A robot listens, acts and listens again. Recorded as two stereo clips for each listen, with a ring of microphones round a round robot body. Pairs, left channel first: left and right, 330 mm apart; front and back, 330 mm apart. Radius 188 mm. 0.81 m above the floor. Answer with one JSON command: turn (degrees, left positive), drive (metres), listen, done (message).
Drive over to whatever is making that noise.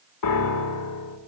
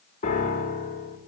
{"turn": 70}
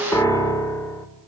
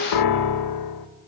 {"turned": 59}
{"turn": 10}
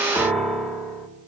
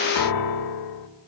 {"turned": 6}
{"drive": 1.0}
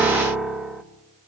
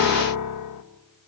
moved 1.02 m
{"drive": 1.0}
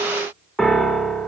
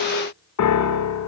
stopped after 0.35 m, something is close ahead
{"done": "I am next to the piano."}